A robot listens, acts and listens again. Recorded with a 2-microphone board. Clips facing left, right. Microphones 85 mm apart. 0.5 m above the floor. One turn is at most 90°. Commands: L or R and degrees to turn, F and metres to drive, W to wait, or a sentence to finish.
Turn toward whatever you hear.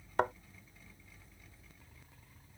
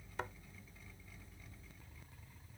L65
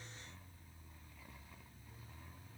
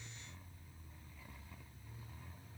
W
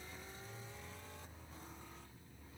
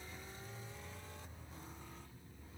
I heard a thud, but can't make it out now. It was about straight ahead or 50° left.